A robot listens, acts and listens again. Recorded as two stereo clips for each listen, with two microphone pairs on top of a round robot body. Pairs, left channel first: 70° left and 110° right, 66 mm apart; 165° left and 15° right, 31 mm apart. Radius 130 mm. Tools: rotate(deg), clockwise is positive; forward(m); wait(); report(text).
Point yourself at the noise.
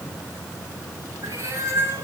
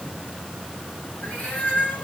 rotate(160)
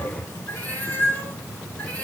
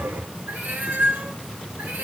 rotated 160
report("Facing the cat meowing.")